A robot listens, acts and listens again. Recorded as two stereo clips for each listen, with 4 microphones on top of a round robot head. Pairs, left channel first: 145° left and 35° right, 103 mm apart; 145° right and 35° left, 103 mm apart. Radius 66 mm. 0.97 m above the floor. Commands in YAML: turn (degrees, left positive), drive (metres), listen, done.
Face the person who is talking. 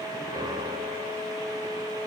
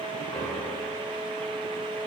listen: true
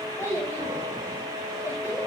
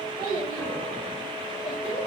turn: -155
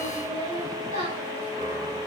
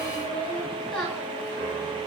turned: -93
turn: -60
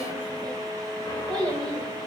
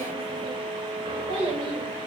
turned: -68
done: "Facing the child speaking."